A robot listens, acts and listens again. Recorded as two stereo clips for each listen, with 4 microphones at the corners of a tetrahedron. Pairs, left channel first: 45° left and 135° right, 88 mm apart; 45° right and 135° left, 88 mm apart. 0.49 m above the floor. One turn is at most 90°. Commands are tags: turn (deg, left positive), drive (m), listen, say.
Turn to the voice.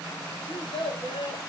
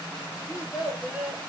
<turn deg="50"/>
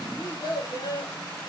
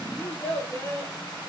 <turn deg="15"/>
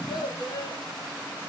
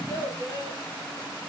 <say>Found it: a child speaking, straight ahead.</say>